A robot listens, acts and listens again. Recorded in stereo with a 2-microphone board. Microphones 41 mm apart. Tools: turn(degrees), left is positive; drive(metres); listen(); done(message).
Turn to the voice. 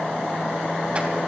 listen()
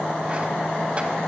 listen()
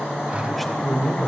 turn(degrees=30)
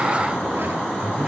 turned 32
turn(degrees=-30)
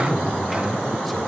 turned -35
done("Found it: a man speaking, straight ahead.")